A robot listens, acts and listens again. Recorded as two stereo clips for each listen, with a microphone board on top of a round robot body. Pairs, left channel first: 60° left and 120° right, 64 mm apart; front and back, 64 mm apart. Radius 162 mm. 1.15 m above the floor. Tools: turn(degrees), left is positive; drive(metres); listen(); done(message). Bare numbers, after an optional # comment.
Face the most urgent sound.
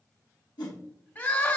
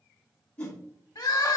done("Found it: crying, straight ahead, 1 to 2 m away.")